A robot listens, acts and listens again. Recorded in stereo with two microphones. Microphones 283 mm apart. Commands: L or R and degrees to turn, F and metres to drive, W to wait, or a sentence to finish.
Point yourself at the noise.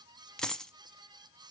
L30
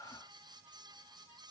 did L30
W
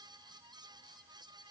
I heard a dropped coin, but can't make it out now. It was about 30° right or 150° left.